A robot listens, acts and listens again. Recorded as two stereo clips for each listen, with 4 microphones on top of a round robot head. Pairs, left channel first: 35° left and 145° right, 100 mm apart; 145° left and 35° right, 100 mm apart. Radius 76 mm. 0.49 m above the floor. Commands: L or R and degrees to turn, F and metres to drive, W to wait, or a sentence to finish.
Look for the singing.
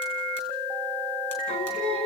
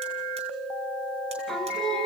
L55
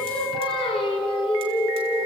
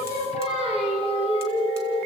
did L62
Facing the singing.